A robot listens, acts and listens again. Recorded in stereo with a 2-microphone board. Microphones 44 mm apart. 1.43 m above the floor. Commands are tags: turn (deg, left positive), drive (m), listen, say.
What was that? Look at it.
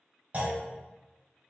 <turn deg="-35"/>
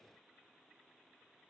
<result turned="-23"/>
<listen/>
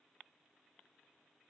<say>I heard a clunk, but can't make it out now. It was about 15° right or 120° right.</say>